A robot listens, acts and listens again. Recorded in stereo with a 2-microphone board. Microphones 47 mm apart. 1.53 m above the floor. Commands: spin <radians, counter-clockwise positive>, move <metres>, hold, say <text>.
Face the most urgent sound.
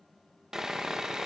hold
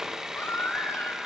spin 1.22
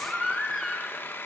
say Found it: a baby crying, straight ahead.